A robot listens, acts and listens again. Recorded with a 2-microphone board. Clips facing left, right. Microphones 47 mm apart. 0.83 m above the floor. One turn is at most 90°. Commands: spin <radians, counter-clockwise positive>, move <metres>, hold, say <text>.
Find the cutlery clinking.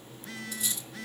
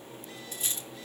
spin -0.61
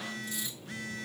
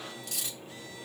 spin -1.57
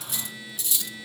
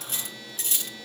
spin -0.87
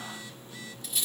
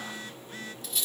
say Facing the cutlery clinking.